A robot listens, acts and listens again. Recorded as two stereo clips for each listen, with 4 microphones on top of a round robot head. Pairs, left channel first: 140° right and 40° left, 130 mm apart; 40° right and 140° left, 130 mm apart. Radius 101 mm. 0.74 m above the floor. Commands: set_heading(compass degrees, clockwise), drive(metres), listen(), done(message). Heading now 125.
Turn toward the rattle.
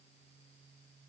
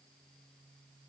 listen()
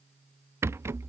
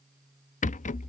set_heading(155)
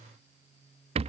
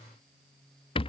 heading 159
done("Found it: a rattle, straight ahead.")